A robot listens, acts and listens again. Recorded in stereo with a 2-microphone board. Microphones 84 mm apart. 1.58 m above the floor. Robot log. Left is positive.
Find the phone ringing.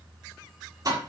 cmd idle
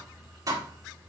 cmd idle
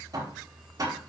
end: I can't make out a phone ringing to turn to.